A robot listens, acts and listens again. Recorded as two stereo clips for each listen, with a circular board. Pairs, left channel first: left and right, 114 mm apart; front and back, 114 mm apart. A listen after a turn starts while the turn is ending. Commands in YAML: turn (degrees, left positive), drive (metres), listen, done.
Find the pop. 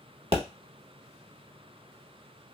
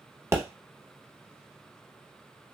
turn: -120
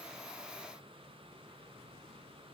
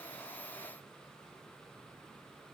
done: "I heard a pop from this way, but can't make it out now."